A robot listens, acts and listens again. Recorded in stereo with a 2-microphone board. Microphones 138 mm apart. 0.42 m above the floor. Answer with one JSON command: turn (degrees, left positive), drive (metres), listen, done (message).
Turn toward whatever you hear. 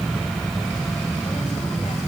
{"listen": true}
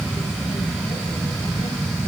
{"listen": true}
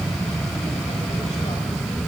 {"done": "I can't make out anything."}